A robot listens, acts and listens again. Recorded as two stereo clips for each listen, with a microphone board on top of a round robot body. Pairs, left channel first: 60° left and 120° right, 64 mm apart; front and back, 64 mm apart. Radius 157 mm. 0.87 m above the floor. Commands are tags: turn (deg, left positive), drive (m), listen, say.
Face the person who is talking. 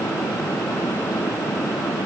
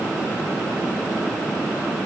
<listen/>
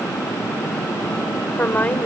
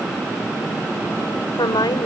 <say>Facing the woman speaking.</say>